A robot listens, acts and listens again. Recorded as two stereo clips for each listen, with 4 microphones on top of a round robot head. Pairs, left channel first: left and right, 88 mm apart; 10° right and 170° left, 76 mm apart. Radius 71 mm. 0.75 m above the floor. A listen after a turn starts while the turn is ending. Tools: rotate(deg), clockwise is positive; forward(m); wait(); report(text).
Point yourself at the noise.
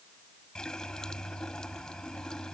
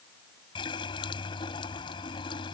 report("Facing the running tap.")